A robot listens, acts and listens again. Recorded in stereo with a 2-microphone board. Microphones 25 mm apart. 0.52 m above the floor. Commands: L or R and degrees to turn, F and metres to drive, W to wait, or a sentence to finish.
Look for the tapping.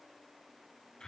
W
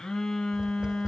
R35
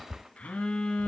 Found it: tapping, straight ahead.